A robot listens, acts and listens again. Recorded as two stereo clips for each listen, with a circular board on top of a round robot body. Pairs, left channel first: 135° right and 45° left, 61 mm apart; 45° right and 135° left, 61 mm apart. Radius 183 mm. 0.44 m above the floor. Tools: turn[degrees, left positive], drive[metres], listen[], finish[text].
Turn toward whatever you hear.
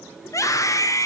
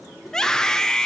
Thought: The scream: 125° right.
Action: turn[-125]
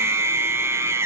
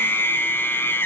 Action: finish[Facing the scream.]